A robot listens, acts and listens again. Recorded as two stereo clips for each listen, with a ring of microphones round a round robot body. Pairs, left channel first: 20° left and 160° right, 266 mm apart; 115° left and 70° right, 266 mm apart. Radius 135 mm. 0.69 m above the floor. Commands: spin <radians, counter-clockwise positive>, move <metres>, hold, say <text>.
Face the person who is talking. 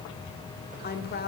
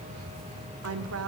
spin -0.52
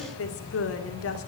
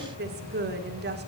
spin -0.26
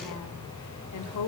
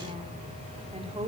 say Found it: a woman speaking, straight ahead, 1 to 2 m away.